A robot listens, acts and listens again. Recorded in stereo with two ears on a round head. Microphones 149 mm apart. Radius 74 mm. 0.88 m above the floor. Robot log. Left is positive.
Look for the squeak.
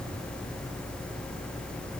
cmd idle
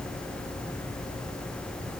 cmd idle
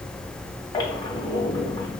note: The squeak: about 25° left or 155° left.
cmd yaw +25
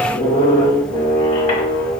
note: So it is at 125° left.
cmd yaw +125
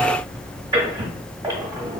note: The squeak is now 20° right.
cmd yaw -20
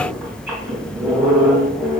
end: Facing the squeak.